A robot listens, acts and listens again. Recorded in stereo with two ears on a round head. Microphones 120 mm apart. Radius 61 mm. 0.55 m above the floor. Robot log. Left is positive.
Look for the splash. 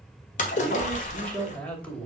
note: The splash: about 60° left or 120° left.
cmd yaw +60
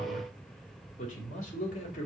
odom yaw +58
cmd idle
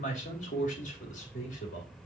end: I heard a splash, but can't make it out now. It was about straight ahead or 65° left.